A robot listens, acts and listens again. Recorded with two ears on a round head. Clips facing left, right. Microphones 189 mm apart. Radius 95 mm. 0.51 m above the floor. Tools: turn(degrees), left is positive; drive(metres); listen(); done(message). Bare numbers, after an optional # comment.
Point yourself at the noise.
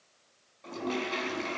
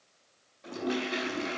turn(-30)
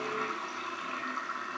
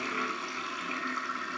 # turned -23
# So it is at 145° right.
turn(-145)
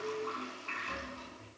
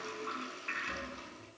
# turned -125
# The toilet flushing is now 20° right.
turn(-20)
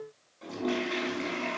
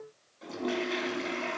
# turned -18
done("Facing the toilet flushing, over 4 m away.")